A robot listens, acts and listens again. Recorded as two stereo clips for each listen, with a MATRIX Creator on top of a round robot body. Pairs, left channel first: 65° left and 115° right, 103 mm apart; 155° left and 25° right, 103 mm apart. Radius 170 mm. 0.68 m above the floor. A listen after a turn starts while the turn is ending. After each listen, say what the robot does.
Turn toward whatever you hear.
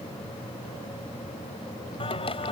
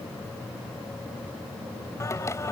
Turn 95° left.
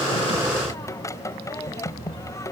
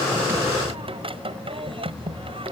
Found it: singing, straight ahead.